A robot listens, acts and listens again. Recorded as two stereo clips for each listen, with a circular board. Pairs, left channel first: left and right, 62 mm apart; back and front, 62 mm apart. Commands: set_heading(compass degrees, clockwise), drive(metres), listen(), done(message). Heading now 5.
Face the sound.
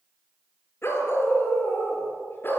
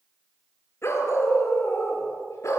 set_heading(220)
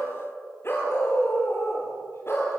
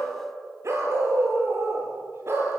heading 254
set_heading(209)
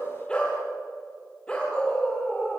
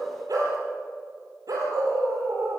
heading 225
set_heading(210)
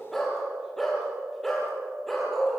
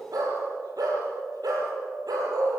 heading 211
done("Facing the dog barking.")